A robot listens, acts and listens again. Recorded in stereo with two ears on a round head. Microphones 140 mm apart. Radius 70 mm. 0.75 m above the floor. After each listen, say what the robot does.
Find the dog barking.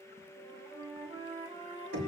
Keep listening.
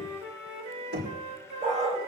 Turn 45° right.
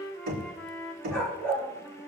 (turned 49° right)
Turn 10° left.
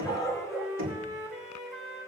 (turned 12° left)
Found it: a dog barking, straight ahead, over 4 m away.